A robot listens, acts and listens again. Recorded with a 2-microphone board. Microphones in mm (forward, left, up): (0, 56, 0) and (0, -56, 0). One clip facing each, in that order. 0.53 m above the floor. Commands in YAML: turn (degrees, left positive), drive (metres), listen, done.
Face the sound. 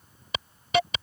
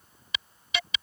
turn: 50
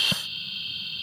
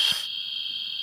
turn: 75
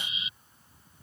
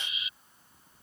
turn: 25
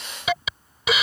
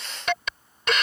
done: "Facing the hiss."